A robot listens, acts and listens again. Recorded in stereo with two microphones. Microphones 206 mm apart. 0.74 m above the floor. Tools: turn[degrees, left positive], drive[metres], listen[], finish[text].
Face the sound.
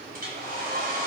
Thought: The hair dryer: about 45° right or 135° right.
Action: turn[-45]
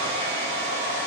Thought: So it is at 90° right.
Action: turn[-90]
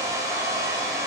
Thought: The hair dryer is now 15° right.
Action: turn[-15]
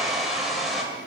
Action: finish[Facing the hair dryer, 2 to 4 m away.]